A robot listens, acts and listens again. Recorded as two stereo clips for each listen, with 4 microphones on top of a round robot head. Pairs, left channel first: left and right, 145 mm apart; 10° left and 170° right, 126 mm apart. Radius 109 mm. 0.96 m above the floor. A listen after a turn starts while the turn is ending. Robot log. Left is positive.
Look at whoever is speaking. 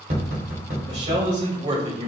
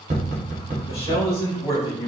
note: The man speaking: 55° right.
cmd yaw -55
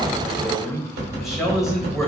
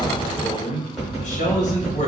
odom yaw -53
end: Facing the man speaking.